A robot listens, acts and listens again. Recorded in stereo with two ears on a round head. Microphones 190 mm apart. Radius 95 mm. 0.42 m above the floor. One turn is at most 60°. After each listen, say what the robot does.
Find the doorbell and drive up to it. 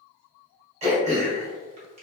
Keep listening.
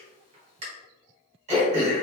Keep listening.
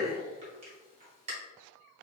I can't make out a doorbell to turn to.